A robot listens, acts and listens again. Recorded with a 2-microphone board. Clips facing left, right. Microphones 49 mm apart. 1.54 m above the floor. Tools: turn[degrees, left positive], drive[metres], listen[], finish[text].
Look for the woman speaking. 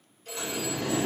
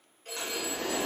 Action: listen[]
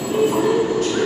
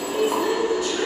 Thought: The woman speaking: about 60° left or 120° left.
Action: turn[60]
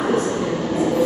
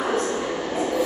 Action: finish[Facing the woman speaking.]